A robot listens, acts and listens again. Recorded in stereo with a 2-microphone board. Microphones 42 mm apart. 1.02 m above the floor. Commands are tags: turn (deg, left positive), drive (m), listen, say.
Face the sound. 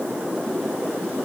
<listen/>
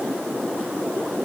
<listen/>
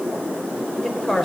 <turn deg="30"/>
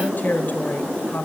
<turn deg="135"/>
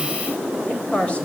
<turn deg="25"/>
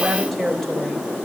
<say>Found it: a woman speaking, straight ahead.</say>